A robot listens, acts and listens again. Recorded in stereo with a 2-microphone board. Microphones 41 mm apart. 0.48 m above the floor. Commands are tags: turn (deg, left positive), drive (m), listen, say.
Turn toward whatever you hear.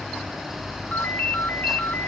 <turn deg="45"/>
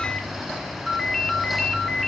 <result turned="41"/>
<say>Found it: a ringtone, straight ahead.</say>